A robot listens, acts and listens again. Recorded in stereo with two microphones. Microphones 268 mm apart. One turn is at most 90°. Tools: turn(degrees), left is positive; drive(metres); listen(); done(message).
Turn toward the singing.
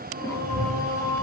turn(degrees=-60)
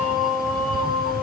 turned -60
done("Facing the singing.")